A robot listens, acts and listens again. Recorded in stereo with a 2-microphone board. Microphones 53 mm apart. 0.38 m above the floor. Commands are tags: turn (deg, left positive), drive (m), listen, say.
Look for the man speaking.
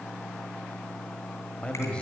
<turn deg="20"/>
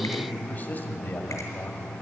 <turn deg="140"/>
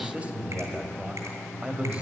<turn deg="-30"/>
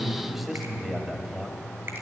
<say>Found it: a man speaking, straight ahead.</say>